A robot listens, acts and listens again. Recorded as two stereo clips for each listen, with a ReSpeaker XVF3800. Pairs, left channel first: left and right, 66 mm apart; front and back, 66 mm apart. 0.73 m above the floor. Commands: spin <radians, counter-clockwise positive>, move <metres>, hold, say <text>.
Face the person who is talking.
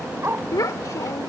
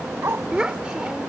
spin 1.83
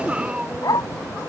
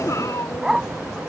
spin -0.35
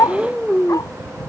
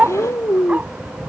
say Found it: a child speaking, straight ahead.